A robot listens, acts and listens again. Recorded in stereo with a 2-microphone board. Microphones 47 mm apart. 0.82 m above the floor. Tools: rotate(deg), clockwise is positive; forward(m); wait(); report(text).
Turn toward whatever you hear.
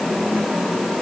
wait()
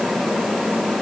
wait()
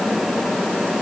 report("I can't make out anything to turn to.")